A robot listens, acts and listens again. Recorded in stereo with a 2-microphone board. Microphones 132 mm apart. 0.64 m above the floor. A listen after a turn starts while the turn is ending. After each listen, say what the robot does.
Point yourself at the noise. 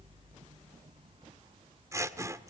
Turn 20° right.
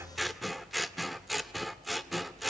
Found it: scissors, straight ahead.